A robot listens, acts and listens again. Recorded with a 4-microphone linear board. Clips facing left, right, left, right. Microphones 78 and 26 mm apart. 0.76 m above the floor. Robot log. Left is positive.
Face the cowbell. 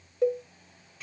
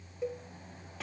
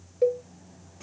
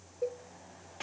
note: The cowbell: about 65° left or 115° left.
cmd yaw +65
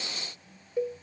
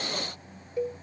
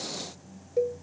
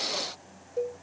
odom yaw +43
note: So it is at 20° left.
cmd yaw +20
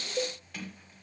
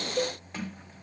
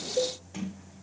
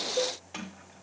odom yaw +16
end: Facing the cowbell, 1 to 2 m away.